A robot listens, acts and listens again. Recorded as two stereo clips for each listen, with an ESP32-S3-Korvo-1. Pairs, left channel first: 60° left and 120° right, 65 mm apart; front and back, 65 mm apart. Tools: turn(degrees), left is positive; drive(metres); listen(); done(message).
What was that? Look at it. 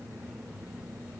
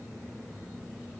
listen()
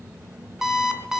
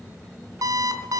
turn(degrees=155)
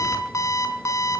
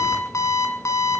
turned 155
turn(degrees=30)
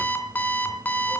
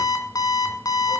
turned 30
done("Facing the alarm clock, 2 to 4 m away.")